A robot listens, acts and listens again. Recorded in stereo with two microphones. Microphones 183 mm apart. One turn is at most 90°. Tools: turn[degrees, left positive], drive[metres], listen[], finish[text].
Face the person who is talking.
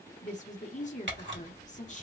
Thought: The woman speaking: about 40° left or 140° left.
Action: turn[40]
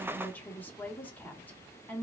Thought: So it is at 10° left.
Action: turn[10]
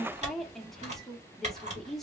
Action: finish[Facing the woman speaking, 1 to 2 m away.]